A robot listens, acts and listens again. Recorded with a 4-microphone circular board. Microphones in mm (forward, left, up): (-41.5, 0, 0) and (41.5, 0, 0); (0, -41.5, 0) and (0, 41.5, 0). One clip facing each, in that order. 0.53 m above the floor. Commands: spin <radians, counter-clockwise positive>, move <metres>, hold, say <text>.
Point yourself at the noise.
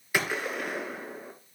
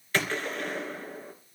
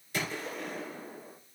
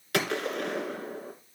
spin 1.75
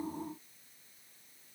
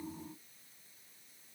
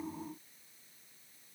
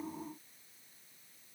say Facing where the gunshot came from. I can't hear it now.